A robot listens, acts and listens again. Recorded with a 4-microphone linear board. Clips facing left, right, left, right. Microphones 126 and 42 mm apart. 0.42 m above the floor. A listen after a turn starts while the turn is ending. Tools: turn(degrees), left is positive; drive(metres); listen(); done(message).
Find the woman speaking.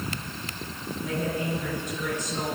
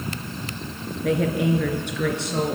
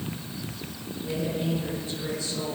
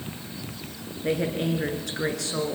turn(degrees=-90)
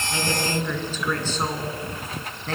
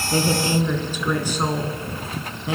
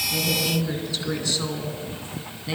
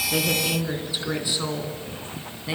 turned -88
turn(degrees=-10)
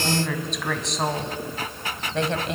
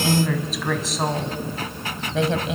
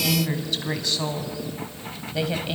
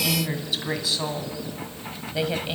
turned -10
done("Facing the woman speaking, 2 to 4 m away.")